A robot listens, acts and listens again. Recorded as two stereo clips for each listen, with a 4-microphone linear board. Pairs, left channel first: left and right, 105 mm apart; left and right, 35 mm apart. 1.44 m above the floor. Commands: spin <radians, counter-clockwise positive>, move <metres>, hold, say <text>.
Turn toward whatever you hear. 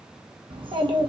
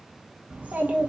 spin -0.87
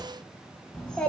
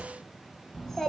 spin 0.17
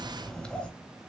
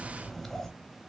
spin 0.17
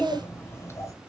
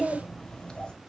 spin 0.52
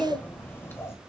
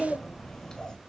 spin 0.44
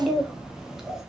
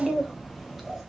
say Facing the child speaking.